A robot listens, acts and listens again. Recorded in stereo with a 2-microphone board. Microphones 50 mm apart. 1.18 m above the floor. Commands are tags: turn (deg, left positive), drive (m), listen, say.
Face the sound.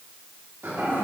<turn deg="-50"/>
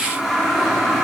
<say>Found it: a toilet flushing, straight ahead.</say>